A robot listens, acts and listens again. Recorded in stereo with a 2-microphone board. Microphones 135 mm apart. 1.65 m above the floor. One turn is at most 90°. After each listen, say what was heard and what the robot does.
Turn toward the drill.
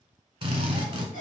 The drill: about 35° right or 145° right. Turn 35° right.
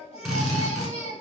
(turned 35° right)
Facing the drill, 1 to 2 m away.